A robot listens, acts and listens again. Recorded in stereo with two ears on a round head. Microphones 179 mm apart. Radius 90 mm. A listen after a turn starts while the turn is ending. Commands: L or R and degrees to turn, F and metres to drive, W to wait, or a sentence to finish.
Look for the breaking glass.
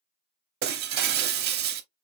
R50
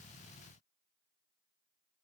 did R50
W
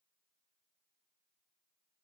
I heard breaking glass, but can't make it out now. It was about straight ahead or 80° right.